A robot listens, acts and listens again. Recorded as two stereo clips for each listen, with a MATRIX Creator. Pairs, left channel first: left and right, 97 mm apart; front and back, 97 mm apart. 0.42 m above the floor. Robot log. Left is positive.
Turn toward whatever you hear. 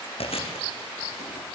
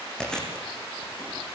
note: The chewing: 85° left.
cmd yaw +85
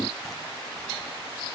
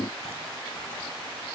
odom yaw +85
cmd idle
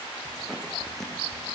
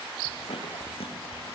end: Facing the chewing, over 4 m away.